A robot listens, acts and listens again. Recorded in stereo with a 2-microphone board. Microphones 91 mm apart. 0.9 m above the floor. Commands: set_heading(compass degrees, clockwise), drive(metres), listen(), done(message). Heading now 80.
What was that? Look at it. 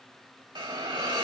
set_heading(135)
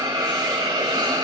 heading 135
set_heading(190)
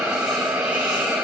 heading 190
set_heading(200)
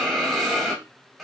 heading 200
done("Found it: a hiss, straight ahead, 1 to 2 m away.")